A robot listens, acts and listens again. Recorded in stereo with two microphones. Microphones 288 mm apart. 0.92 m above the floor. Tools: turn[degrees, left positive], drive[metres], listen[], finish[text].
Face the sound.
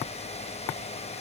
Action: listen[]
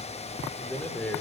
Action: turn[30]
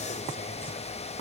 Action: listen[]
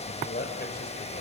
Thought: So it is at 145° left.
Action: turn[145]
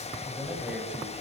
Action: listen[]
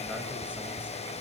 Action: listen[]
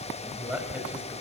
Action: finish[Facing the man speaking, over 4 m away.]